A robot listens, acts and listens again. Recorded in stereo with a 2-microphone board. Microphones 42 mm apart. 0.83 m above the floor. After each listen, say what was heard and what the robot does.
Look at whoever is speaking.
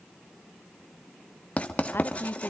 The woman speaking: about 55° left or 125° left. Turn 55° left.
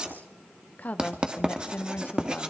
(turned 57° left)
So it is at 45° left. Turn 45° left.
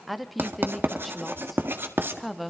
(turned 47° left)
Facing the woman speaking, 1 to 2 m away.